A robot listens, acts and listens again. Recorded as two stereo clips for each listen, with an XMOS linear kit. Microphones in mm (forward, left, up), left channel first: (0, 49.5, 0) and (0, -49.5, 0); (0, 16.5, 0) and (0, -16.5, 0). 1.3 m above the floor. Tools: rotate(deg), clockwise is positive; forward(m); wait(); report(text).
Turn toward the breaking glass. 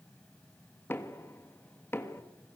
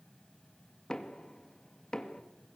wait()
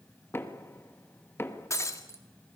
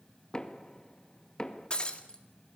rotate(-30)
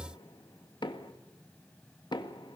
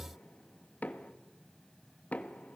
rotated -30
wait()
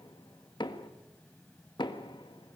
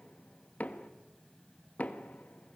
report("I heard breaking glass, but can't make it out now. It was about straight ahead or 120° left.")